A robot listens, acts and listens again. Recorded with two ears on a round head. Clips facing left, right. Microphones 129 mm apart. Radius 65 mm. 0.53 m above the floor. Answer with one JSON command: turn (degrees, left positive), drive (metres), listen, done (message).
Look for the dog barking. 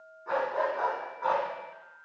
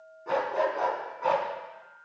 {"turn": -30}
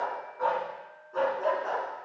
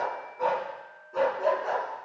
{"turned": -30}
{"turn": -30}
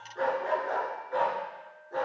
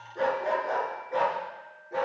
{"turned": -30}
{"turn": -30}
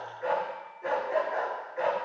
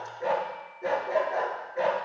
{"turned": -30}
{"turn": -140}
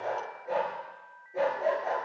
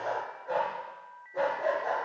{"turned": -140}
{"turn": 15}
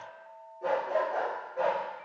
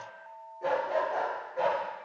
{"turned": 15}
{"done": "Facing the dog barking."}